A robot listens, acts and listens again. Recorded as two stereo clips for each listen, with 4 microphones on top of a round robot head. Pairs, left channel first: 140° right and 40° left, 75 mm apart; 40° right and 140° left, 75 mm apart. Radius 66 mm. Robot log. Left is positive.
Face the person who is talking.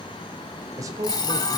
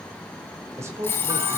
note: The man speaking: 85° left.
cmd yaw +85
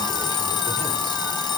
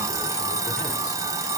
cmd idle
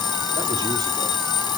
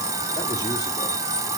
cmd idle
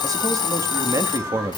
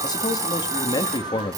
note: The man speaking is now 15° right.
cmd yaw -15
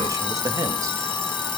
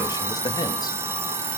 cmd idle
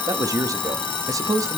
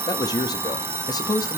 end: Facing the man speaking.